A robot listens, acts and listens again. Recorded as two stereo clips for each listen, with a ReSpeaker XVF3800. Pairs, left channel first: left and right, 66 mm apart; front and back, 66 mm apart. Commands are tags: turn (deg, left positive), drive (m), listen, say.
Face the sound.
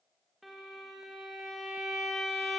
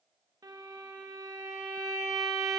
<turn deg="180"/>
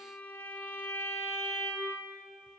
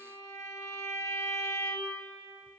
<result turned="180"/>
<turn deg="30"/>
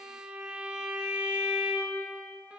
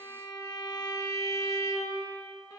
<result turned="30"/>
<turn deg="-20"/>
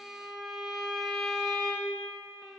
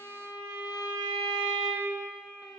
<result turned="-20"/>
<say>Found it: a violin, straight ahead.</say>